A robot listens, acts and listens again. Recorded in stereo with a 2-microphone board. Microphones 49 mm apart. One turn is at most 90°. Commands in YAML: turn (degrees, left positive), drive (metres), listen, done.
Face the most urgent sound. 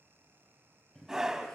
turn: -30
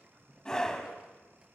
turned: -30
turn: 15
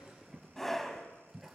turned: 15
done: "Found it: a scream, straight ahead."